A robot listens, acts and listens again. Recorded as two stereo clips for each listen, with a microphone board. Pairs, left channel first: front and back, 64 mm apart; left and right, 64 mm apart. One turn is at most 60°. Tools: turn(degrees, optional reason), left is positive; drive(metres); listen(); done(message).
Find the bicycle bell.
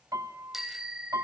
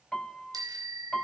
turn(degrees=-60, reason="The bicycle bell: 100° right.")
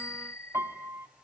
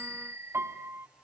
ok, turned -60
turn(degrees=-45, reason="The bicycle bell is now 45° right.")
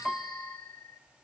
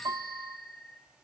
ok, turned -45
done("Facing the bicycle bell.")